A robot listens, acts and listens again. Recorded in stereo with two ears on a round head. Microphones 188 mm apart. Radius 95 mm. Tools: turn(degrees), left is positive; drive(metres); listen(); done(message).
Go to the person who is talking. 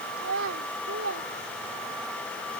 turn(degrees=-65)
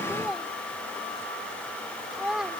drive(metres=1.0)
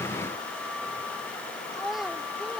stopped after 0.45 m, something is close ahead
done("Something is in my way. I am facing the child speaking but have not reached it.")